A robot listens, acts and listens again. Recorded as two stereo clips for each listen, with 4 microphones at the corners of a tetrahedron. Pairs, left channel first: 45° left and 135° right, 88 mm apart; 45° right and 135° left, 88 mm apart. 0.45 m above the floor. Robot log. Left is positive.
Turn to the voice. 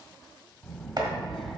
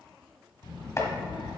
note: The child speaking: 45° right.
cmd yaw -45
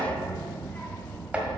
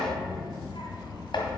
note: The child speaking is now 30° right.
cmd yaw -30
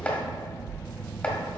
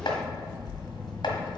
note: The child speaking is now 25° right.
cmd yaw -25
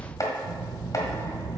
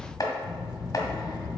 note: The child speaking is now 15° right.
cmd yaw -15
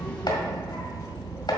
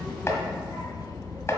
end: Found it: a child speaking, straight ahead, 2 to 4 m away.